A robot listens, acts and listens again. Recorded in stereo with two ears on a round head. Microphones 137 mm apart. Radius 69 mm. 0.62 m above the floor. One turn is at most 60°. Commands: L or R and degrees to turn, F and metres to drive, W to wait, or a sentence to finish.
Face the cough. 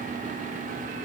W
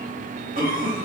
R60
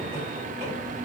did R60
W
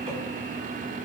R40
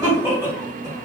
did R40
R20
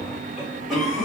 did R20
Facing the cough, 1 to 2 m away.